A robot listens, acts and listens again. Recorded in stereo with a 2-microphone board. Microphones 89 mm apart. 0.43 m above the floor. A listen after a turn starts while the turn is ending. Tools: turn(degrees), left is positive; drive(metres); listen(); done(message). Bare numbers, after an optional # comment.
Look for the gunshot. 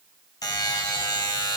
listen()
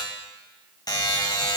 listen()
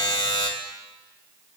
done("I can't make out a gunshot, only a buzzer.")